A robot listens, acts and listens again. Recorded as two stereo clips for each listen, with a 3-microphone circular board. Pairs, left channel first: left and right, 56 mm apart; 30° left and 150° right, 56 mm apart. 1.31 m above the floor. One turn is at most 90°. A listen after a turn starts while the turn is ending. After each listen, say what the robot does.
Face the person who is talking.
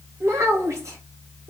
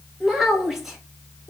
Turn 65° right.
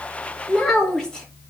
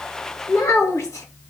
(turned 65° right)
Turn 15° left.
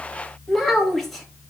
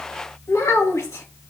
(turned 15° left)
Found it: a child speaking, straight ahead, 1 to 2 m away.